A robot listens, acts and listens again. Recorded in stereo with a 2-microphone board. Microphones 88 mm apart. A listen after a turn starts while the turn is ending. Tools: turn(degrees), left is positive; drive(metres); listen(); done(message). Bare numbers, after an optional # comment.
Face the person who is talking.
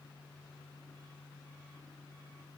listen()
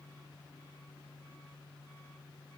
listen()
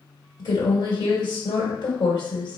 # The woman speaking: about 55° left or 125° left.
turn(55)
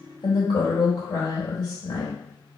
# So it is at 55° left.
turn(55)
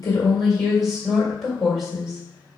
done("Facing the woman speaking.")